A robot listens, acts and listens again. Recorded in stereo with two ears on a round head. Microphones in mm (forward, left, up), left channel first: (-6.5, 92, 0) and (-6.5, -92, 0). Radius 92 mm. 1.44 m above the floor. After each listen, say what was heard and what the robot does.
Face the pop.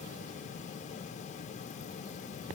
Keep listening.
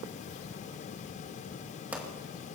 Turn 30° right.
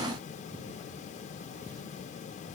Keep listening.
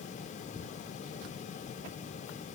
I heard a pop, but can't make it out now. It was about 25° left or 145° right.